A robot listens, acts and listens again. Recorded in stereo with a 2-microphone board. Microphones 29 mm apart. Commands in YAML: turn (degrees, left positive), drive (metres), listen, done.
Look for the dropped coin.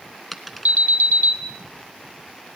turn: 30
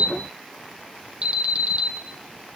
listen: true
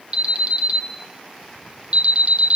done: "I heard a dropped coin, but can't make it out now. It was about 30° right or 150° left."